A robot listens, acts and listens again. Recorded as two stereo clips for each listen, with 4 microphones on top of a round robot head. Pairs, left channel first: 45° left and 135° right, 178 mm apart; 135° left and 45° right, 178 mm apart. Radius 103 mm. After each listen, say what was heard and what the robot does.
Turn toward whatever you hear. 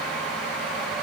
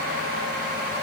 Keep listening.
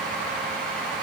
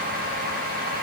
Keep listening.
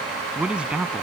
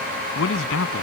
The man speaking: 140° left. Turn 140° left.
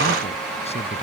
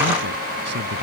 Keep listening.
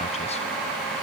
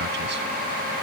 Keep listening.
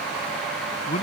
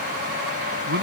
The man speaking is now 15° right. Turn 15° right.
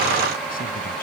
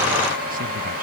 Keep listening.
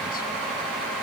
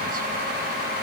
Keep listening.
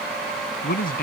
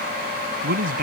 Found it: a man speaking, straight ahead.